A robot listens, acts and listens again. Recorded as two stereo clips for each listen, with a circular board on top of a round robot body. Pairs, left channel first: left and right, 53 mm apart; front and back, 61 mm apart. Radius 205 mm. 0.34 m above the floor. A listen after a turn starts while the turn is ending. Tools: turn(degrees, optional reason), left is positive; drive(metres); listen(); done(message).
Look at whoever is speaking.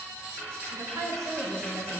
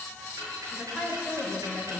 turn(degrees=-100, reason="The woman speaking: 100° right.")
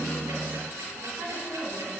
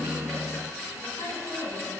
turn(degrees=-40, reason="The woman speaking is now 40° right.")
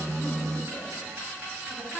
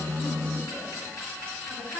listen()
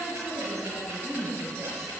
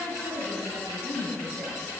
done("Found it: a woman speaking, straight ahead.")